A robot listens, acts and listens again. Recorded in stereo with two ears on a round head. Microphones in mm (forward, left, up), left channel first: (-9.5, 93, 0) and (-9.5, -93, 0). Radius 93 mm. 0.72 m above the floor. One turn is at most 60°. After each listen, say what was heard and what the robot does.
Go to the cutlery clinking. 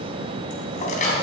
The cutlery clinking: about 40° left or 140° left. Turn 40° left.
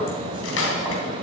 So it is at 100° left. Turn 60° left.
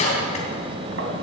The cutlery clinking is now 35° left. Turn 35° left.
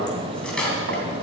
Drive 1.0 m forward.
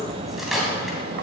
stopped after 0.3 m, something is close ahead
Blocked. The cutlery clinking is further on, straight ahead.